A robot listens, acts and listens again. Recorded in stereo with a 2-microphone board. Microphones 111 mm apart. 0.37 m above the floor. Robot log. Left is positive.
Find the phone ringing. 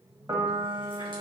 cmd idle
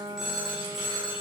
cmd yaw -30
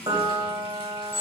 note: So it is at 25° left.
cmd yaw +25
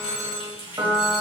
end: Facing the phone ringing, 1 to 2 m away.